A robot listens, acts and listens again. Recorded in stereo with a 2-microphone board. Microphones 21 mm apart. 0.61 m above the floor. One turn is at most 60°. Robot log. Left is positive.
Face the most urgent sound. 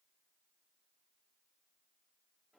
cmd idle
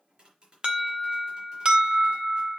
note: The alarm: about 50° right or 130° right.
cmd yaw -50
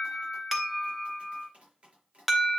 note: So it is at 15° right.
cmd yaw -15
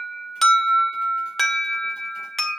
end: Facing the alarm, 1 to 2 m away.